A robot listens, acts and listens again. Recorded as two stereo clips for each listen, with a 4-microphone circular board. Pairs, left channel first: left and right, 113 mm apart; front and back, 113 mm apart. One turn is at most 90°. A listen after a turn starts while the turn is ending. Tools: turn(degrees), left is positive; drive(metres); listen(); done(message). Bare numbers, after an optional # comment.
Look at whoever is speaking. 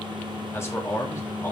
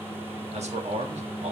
# The man speaking: 160° left.
turn(90)
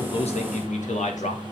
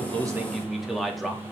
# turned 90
# The man speaking is now 90° left.
turn(90)
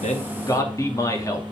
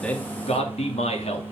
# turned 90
# The man speaking is now 30° left.
turn(30)
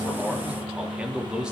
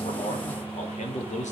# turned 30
done("Found it: a man speaking, straight ahead.")